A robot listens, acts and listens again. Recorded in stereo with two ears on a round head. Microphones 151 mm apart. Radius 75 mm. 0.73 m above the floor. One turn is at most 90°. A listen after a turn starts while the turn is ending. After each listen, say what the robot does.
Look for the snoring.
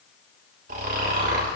Turn 50° right.
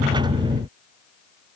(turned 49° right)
Keep listening.
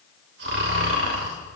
Turn 80° right.
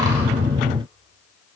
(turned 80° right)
Keep listening.
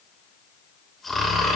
Found it: snoring, straight ahead, 2 to 4 m away.